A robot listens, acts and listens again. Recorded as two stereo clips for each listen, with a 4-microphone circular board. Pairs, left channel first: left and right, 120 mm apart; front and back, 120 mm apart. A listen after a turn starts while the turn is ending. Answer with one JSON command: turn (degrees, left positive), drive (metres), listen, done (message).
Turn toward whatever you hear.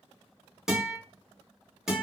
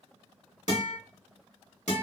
{"done": "Found it: a guitar, straight ahead."}